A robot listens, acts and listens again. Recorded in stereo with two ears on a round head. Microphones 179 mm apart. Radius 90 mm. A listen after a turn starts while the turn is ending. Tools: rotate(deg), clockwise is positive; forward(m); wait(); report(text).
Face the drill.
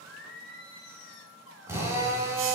rotate(30)
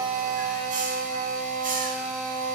rotate(140)
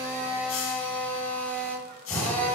report("Facing the drill.")